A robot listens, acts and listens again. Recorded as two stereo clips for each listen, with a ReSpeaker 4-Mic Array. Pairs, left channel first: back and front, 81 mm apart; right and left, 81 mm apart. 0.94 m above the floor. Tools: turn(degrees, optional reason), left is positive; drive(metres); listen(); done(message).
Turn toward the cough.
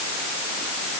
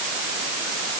listen()
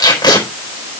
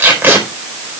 listen()
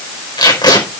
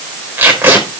done("I can't make out a cough to turn to.")